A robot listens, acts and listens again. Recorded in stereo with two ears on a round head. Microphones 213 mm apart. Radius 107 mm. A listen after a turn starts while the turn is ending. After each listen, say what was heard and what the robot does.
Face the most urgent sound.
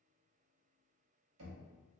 Keep listening.
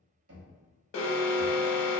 The alarm: about 60° left or 120° left. Turn 60° left.
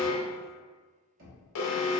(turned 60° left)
So it is at 60° left. Turn 60° left.
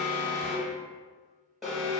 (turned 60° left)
Found it: an alarm, straight ahead.